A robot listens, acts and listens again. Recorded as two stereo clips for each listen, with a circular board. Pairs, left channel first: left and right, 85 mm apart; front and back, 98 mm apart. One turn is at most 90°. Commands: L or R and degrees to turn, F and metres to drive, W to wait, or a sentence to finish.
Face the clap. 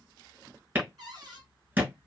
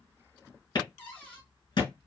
R30
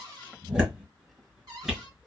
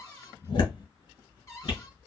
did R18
R10
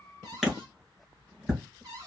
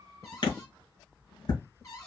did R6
Facing the clap.